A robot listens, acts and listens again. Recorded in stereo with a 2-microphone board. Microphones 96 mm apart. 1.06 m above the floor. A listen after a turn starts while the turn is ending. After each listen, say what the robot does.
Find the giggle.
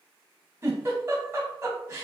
Turn 35° right.
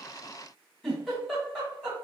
Found it: a giggle, straight ahead.